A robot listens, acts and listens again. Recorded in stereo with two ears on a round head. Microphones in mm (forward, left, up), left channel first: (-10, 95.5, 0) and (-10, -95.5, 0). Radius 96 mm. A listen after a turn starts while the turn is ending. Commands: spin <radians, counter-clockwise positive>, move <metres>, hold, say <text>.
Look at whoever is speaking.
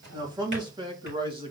spin -0.44
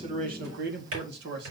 spin -2.09
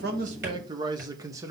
spin -0.26
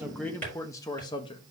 spin 0.44
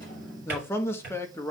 spin 0.17
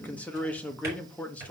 spin 0.17
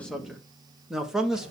say Facing the man speaking, 1 to 2 m away.